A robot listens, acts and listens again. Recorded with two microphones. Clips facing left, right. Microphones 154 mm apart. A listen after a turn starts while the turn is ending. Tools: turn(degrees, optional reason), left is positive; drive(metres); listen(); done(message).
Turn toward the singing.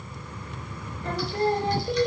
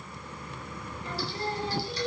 turn(degrees=60, reason="The singing: about 60° left or 120° left.")
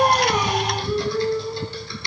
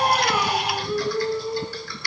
turn(degrees=-15, reason="So it is at 15° right.")
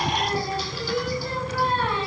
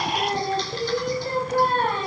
turn(degrees=-50, reason="The singing is now 50° right.")
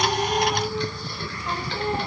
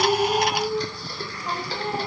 turn(degrees=-10, reason="The singing is now 10° right.")
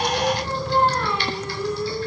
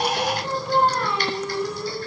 done("Found it: singing, straight ahead.")